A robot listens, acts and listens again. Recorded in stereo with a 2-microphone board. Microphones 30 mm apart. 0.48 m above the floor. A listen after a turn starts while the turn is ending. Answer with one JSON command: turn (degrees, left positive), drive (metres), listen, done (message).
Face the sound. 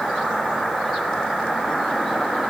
{"listen": true}
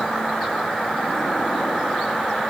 {"listen": true}
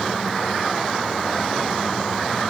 {"done": "I can't make out anything to turn to."}